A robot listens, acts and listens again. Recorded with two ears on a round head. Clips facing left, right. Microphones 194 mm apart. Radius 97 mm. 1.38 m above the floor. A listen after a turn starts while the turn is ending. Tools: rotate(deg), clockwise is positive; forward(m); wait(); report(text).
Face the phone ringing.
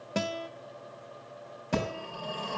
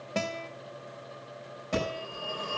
rotate(-90)
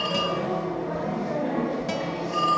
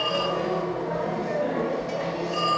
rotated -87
report("Facing the phone ringing, over 4 m away.")